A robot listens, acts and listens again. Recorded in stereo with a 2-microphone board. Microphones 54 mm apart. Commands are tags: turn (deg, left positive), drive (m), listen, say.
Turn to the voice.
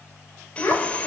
<turn deg="60"/>
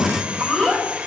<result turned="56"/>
<say>Found it: a child speaking, straight ahead.</say>